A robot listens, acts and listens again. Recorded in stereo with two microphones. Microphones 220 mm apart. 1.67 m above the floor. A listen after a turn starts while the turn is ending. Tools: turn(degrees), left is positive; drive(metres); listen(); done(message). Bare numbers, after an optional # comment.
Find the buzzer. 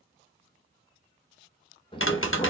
listen()
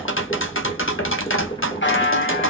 # The buzzer: about 60° left or 120° left.
turn(60)
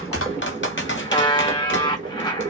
# So it is at 25° left.
turn(25)
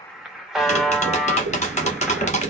done("Found it: a buzzer, straight ahead.")